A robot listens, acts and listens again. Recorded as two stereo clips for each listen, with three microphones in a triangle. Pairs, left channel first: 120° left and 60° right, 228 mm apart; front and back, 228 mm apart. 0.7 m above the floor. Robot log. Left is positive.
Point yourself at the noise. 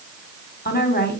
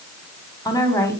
note: The woman speaking: 75° left.
cmd yaw +75
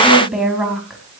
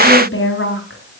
note: The woman speaking is now 30° left.
cmd yaw +30
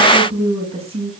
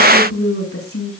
end: Facing the woman speaking.